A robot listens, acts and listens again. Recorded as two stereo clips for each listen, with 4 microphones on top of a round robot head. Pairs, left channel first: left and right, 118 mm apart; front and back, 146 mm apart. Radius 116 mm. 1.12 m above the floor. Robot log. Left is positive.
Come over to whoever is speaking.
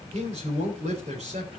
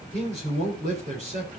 note: The man speaking: 130° right.
cmd yaw -130
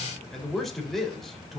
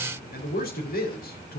cmd fwd 1.0
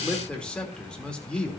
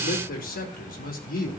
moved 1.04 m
note: The man speaking is now 10° left.
cmd yaw +10
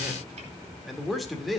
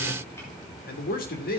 cmd fwd 1.0
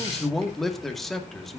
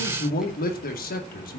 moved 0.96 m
cmd fwd 1.0
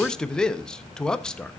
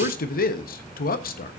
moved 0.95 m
cmd fwd 1.0
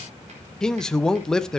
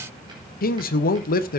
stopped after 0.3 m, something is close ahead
end: I am next to the man speaking.